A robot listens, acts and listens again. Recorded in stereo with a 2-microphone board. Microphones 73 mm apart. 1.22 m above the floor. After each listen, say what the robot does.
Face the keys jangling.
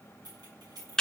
Turn 90° right.
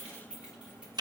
Turn 15° right.
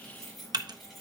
Found it: keys jangling, straight ahead, over 4 m away.